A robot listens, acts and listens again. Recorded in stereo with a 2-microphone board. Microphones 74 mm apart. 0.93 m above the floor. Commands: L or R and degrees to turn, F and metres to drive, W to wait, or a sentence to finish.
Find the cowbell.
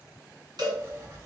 R70
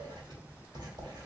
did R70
W
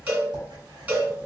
R20
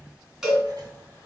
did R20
Facing the cowbell.